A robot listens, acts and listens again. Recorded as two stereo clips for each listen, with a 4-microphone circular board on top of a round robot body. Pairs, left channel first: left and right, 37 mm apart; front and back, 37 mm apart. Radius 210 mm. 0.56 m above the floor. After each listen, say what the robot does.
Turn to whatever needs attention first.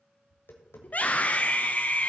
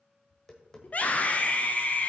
Turn 45° left.
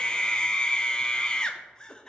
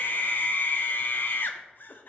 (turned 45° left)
Turn 20° left.
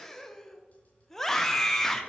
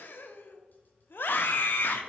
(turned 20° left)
Turn 10° left.
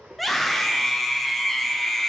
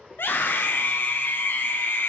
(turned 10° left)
Found it: a scream, straight ahead.